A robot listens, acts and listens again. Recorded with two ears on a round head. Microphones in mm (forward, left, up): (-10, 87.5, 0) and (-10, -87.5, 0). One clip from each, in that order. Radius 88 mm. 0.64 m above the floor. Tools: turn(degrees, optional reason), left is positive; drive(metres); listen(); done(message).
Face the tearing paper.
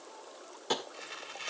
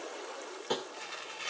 turn(degrees=30)
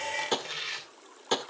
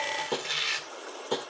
turn(degrees=-20, reason="So it is at 20° right.")
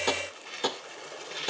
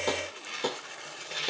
done("Facing the tearing paper.")